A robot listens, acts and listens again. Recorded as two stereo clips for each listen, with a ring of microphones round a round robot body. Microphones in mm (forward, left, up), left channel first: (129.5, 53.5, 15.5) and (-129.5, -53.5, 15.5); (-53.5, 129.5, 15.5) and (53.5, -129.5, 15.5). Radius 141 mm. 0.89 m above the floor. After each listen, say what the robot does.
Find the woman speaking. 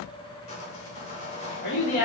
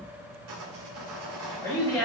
Turn 30° left.
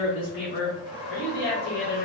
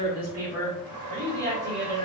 Turn 30° right.
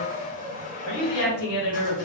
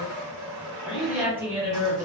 Found it: a woman speaking, straight ahead, 2 to 4 m away.